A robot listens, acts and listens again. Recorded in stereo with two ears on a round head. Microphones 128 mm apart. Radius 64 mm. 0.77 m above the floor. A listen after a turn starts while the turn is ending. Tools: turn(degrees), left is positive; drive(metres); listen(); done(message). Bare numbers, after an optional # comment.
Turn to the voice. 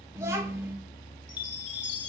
# The child speaking: about 20° right or 160° right.
turn(-20)
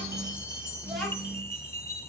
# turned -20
done("Found it: a child speaking, straight ahead.")